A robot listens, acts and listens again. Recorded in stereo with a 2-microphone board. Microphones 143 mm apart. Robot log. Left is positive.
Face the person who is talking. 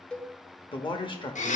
note: The man speaking: about 35° left or 145° left.
cmd yaw +35
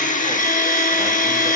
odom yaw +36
cmd idle
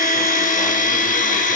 cmd idle
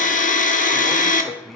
end: Facing the man speaking, 1 to 2 m away.